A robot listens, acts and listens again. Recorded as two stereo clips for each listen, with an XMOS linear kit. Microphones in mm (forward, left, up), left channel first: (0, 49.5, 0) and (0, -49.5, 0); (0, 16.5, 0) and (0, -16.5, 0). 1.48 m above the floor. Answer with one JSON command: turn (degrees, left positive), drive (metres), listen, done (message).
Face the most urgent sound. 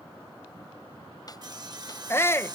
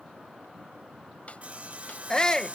{"turn": 25}
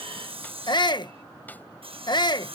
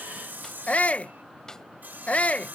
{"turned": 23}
{"turn": 130}
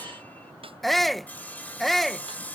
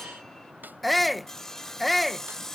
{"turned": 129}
{"done": "Facing the shout."}